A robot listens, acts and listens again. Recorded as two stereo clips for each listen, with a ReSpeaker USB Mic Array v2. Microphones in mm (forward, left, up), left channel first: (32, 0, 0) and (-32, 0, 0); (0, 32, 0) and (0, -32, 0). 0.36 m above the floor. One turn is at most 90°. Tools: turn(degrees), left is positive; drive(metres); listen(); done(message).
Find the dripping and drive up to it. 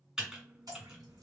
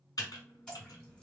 turn(degrees=90)
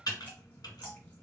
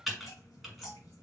turn(degrees=65)
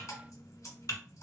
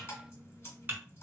turn(degrees=40)
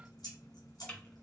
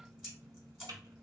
turn(degrees=-10)
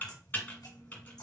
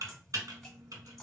drive(metres=1.0)
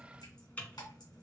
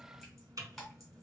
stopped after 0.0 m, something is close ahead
done("Something is in my way. I am facing the dripping but have not reached it.")